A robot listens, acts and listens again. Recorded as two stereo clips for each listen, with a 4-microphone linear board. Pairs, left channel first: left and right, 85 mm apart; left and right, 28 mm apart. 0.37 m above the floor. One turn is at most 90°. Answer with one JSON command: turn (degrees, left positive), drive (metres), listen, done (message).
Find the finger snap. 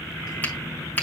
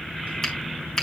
{"turn": 20}
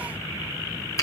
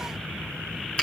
{"turn": 90}
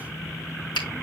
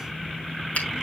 {"turn": 75}
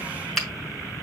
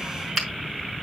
{"done": "Found it: a finger snap, straight ahead, 2 to 4 m away."}